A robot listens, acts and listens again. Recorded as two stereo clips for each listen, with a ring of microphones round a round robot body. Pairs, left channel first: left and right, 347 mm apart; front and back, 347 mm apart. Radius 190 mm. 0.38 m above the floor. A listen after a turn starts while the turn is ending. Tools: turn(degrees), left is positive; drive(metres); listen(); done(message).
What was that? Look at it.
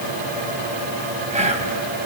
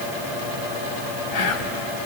turn(degrees=-20)
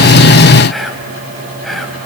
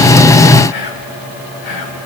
done("Found it: whispering, straight ahead.")